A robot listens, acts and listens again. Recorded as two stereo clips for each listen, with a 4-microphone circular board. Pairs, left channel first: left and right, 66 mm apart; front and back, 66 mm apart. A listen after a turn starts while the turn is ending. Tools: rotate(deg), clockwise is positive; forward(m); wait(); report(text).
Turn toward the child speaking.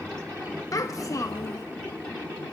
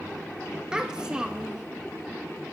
rotate(-105)
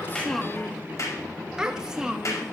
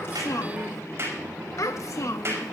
rotate(15)
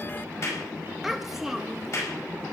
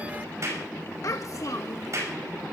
report("Found it: a child speaking, straight ahead, 1 to 2 m away.")